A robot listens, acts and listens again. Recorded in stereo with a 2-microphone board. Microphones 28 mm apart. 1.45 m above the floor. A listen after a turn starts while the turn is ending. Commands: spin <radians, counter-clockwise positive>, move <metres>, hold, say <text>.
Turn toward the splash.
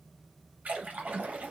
spin -1.05
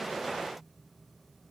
hold
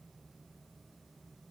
say I heard a splash, but can't make it out now. It was about straight ahead or 60° right.